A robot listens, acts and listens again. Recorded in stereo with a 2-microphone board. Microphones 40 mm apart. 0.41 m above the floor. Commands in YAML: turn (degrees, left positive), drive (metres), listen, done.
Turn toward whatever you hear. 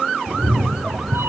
turn: -90
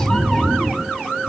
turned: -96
turn: 15
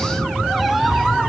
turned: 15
done: "Facing the cat meowing, over 4 m away."